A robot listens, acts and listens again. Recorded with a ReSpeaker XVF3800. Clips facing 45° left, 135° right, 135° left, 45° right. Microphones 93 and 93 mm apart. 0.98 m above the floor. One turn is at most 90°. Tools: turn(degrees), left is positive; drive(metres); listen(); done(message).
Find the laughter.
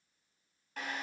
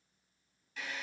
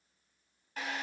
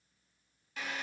listen()
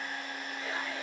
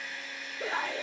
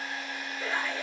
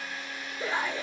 turn(degrees=-90)
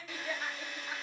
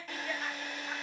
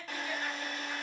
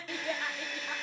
turn(degrees=-40)
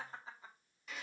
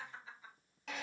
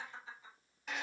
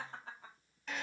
turn(degrees=-10)
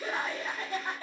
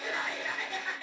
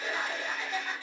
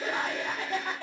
turn(degrees=-10)
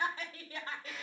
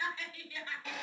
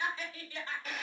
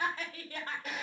done("Facing the laughter, 2 to 4 m away.")